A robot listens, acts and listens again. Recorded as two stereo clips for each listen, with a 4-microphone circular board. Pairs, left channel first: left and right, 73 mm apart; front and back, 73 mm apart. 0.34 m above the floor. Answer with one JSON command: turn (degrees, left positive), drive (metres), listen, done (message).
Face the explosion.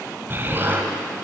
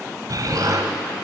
{"turn": -150}
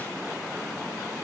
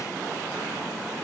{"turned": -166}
{"turn": 15}
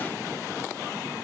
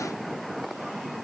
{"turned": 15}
{"done": "I heard an explosion from this way, but can't make it out now."}